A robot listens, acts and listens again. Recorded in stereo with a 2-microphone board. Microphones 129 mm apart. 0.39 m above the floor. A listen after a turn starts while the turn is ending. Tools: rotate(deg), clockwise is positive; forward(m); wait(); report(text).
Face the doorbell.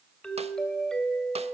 rotate(-30)
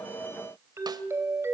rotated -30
rotate(25)
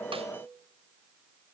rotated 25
wait()
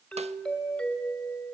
rotate(-10)
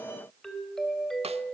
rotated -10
report("Facing the doorbell.")